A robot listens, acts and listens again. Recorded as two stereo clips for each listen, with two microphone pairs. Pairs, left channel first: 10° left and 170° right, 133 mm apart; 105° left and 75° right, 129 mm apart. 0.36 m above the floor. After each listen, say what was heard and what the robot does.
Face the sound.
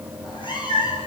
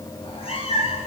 The cat meowing: 65° left. Turn 65° left.
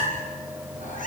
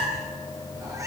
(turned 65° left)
Facing the cat meowing.